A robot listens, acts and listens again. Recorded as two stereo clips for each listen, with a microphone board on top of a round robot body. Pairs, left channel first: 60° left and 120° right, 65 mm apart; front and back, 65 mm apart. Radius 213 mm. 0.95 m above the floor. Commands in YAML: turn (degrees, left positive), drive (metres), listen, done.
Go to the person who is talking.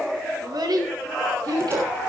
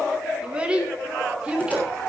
turn: -105
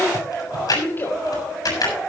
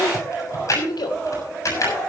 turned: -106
drive: 1.0
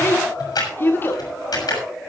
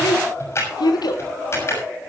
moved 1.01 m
drive: 1.0
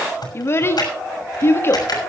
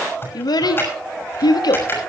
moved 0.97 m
drive: 1.0
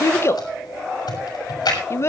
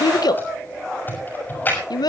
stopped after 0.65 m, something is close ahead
turn: 10
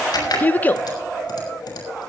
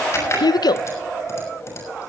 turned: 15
done: "Arrived at the child speaking, straight ahead."